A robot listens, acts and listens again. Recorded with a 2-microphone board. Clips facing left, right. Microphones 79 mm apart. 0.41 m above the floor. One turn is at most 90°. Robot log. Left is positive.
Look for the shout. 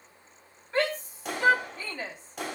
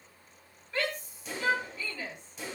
note: The shout: about 35° left or 145° left.
cmd yaw +35
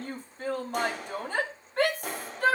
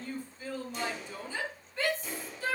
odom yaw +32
note: So it is at 110° left.
cmd yaw +90
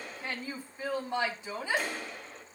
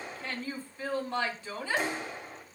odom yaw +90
note: The shout is now 20° left.
cmd yaw +20
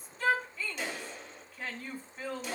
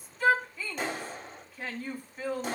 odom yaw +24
end: Found it: a shout, straight ahead, 2 to 4 m away.